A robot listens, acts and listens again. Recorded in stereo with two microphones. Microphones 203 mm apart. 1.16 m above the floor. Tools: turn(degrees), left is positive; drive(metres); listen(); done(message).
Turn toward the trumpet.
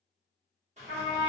turn(degrees=-55)
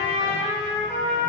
turn(degrees=-60)
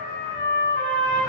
turn(degrees=10)
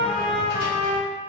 done("Found it: a trumpet, straight ahead.")